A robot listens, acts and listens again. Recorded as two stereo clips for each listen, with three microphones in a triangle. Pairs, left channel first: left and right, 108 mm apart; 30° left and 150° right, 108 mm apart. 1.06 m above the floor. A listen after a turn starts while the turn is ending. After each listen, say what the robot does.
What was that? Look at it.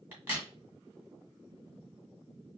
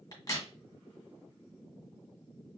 Turn 20° right.
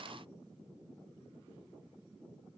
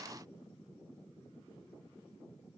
Facing where the crack came from. I can't hear it now.